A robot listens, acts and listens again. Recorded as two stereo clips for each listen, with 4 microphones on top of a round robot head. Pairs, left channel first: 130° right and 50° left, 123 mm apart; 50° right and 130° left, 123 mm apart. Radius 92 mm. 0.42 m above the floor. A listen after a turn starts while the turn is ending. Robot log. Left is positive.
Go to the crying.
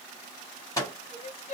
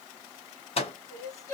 note: The crying: 110° right.
cmd yaw -110
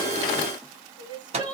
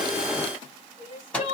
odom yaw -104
note: The crying is now 10° right.
cmd yaw -10
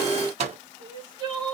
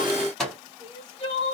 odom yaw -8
cmd fwd 1.0
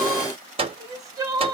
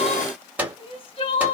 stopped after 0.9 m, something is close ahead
note: The crying is now 10° right.
cmd yaw -10
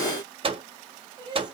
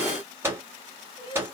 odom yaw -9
end: Arrived at the crying, straight ahead.